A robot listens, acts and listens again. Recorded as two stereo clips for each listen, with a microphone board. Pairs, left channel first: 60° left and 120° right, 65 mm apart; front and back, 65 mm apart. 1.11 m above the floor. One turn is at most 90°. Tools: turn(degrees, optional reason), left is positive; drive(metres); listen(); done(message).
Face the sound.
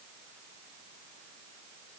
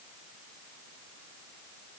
listen()
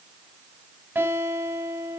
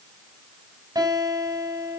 turn(degrees=-90, reason="The guitar: 175° right.")
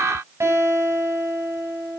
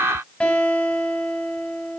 turn(degrees=-70, reason="The guitar is now 70° right.")
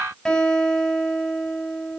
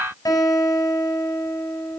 turn(degrees=-20, reason="The guitar is now 20° right.")
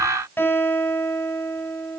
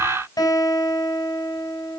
done("Facing the guitar.")